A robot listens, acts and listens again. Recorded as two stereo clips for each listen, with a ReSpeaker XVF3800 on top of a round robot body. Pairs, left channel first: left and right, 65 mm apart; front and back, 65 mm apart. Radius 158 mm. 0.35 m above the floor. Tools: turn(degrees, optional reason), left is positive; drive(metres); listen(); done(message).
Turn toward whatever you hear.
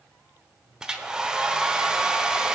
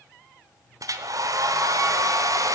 turn(degrees=-170, reason="The hair dryer: 170° right.")
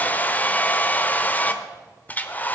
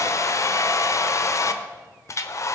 turn(degrees=30, reason="The hair dryer is now 30° left.")
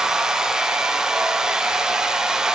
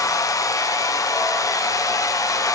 turn(degrees=-10, reason="The hair dryer is now 10° right.")
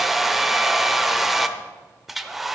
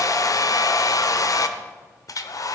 done("Facing the hair dryer.")